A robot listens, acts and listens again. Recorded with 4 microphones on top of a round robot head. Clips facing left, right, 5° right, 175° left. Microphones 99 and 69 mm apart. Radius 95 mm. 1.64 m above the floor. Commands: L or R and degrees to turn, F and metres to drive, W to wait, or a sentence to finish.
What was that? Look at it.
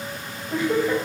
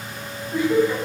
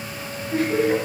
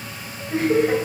L115
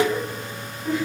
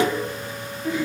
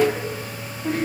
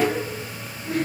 R15
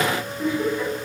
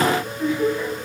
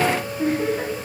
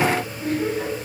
Facing the laughter.